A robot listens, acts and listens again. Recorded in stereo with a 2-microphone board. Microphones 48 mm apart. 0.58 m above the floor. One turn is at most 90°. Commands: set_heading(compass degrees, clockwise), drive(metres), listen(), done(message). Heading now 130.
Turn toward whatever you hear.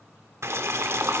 set_heading(190)
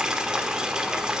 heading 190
set_heading(205)
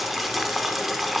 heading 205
done("Facing the boiling, 1 to 2 m away.")